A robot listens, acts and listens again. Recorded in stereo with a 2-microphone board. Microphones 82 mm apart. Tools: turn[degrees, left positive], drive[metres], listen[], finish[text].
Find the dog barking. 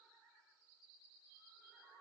Action: listen[]
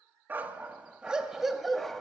Action: turn[30]
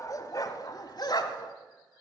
Thought: So it is at 120° left.
Action: turn[120]
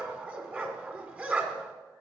Thought: The dog barking is now 20° right.
Action: turn[-20]
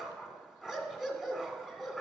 Action: finish[Found it: a dog barking, straight ahead.]